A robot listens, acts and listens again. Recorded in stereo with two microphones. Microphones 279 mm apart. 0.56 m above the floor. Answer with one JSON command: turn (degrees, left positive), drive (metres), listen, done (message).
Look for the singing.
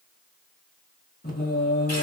{"turn": 35}
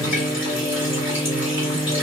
{"done": "Found it: singing, straight ahead."}